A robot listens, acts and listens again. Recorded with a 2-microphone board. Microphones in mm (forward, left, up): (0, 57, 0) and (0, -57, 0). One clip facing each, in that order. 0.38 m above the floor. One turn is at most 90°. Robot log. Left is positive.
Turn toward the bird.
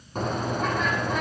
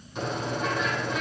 note: The bird: about 40° left or 140° left.
cmd yaw +40
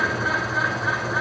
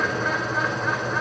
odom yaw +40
end: Found it: a bird, straight ahead.